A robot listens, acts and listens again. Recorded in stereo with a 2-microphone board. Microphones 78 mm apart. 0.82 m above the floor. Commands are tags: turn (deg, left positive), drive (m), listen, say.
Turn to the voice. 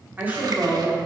<turn deg="-15"/>
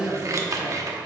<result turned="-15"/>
<turn deg="-25"/>
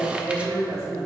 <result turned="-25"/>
<turn deg="-145"/>
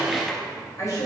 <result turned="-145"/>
<turn deg="40"/>
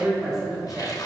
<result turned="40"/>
<say>Facing the woman speaking, 2 to 4 m away.</say>